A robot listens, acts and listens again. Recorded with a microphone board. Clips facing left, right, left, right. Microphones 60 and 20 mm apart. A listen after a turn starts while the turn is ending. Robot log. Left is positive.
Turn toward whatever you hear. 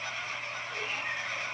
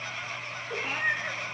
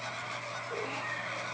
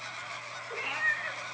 cmd yaw -90
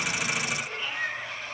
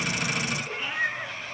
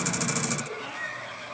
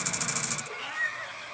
note: So it is at 25° right.
cmd yaw -25
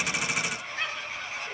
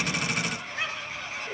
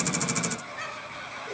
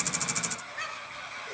note: The cat meowing is now 10° right.
cmd yaw -10
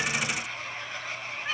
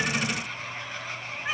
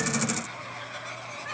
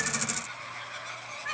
note: The cat meowing is now 15° right.
cmd yaw -15
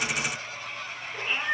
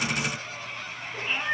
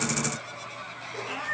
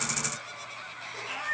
end: Facing the cat meowing.